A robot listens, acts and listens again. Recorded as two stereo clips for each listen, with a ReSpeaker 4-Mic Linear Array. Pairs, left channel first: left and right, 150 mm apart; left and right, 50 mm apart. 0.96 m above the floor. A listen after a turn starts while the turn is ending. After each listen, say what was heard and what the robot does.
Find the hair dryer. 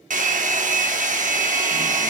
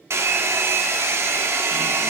The hair dryer: about 65° right or 115° right. Turn 65° right.
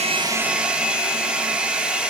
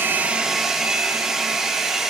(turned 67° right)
So it is at 10° right. Turn 10° right.
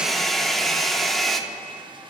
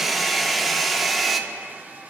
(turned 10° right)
Found it: a hair dryer, straight ahead.